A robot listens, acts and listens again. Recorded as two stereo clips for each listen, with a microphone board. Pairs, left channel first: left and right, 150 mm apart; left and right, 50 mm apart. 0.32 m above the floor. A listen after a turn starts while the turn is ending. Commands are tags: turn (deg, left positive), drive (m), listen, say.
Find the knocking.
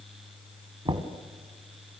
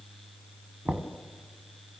<turn deg="-35"/>
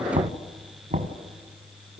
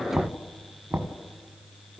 <turn deg="-105"/>
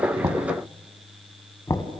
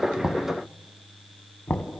<turn deg="25"/>
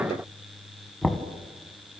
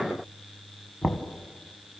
<say>Found it: knocking, straight ahead, 1 to 2 m away.</say>